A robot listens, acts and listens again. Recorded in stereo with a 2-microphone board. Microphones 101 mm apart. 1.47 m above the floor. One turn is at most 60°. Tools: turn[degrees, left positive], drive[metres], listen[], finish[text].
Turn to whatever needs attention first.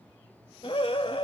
Thought: The scream: about 65° left or 115° left.
Action: turn[60]
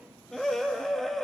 Action: finish[Facing the scream.]